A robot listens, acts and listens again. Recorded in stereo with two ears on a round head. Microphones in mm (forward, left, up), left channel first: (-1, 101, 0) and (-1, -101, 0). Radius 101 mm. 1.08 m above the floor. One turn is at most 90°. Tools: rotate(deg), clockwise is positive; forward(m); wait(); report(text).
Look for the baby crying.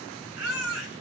rotate(90)
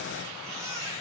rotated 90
rotate(15)
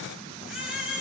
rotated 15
report("Facing the baby crying.")